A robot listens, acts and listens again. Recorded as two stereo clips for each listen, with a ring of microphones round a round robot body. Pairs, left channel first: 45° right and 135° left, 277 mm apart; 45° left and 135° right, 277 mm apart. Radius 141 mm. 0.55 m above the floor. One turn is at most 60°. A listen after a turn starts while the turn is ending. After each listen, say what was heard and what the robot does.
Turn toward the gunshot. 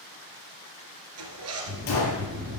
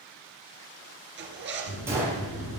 The gunshot: 55° right. Turn 55° right.
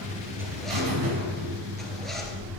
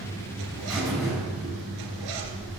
I heard a gunshot from this way, but can't make it out now.